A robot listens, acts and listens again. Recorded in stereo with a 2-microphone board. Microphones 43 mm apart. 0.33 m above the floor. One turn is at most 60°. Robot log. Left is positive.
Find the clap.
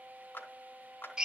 note: The clap: about 65° left or 115° left.
cmd yaw +60
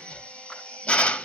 cmd idle
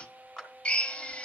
note: So it is at 25° left.
cmd yaw +25
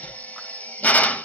cmd idle
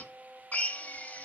cmd idle
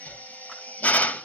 end: Facing where the clap came from. I can't hear it now.